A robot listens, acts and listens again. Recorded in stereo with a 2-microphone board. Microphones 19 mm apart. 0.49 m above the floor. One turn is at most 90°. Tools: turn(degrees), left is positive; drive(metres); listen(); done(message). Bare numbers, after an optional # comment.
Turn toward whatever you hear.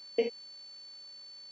# The door slam: about 20° right or 160° right.
turn(-20)
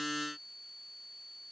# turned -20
listen()
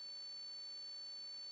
done("I heard a door slam, but can't make it out now. It was about straight ahead or 140° right.")